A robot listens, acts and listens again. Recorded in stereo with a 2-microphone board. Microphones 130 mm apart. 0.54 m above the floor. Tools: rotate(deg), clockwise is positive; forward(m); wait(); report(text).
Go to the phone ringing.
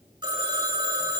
rotate(35)
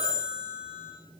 rotate(110)
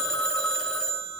forward(1.0)
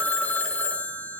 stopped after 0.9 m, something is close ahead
rotate(-15)
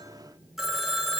report("Arrived at the phone ringing, straight ahead.")